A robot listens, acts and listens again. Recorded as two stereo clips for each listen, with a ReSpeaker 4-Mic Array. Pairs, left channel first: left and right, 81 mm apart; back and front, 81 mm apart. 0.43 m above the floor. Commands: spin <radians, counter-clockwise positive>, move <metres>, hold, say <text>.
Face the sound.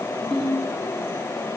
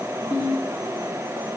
spin 3.05
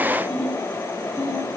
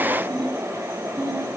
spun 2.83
spin 0.17
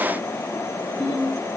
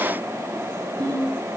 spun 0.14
say Facing the ringtone.